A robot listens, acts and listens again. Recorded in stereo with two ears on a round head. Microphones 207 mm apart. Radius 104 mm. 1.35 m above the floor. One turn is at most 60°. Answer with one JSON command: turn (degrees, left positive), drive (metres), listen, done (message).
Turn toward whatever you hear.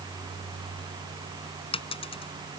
{"turn": 25}
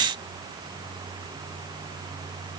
{"listen": true}
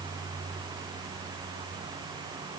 {"done": "I heard a dropped coin, but can't make it out now. It was about straight ahead or 130° left."}